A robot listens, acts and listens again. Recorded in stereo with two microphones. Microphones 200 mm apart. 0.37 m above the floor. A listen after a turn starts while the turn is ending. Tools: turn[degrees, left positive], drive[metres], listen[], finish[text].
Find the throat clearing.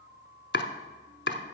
Action: listen[]
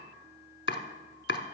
Action: listen[]
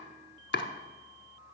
Action: finish[I can't make out throat clearing to turn to.]